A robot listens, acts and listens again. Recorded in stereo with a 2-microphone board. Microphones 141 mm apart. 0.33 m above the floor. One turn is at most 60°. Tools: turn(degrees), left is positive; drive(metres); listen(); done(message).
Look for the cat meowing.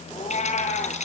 turn(degrees=60)
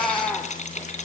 done("Facing the cat meowing, 2 to 4 m away.")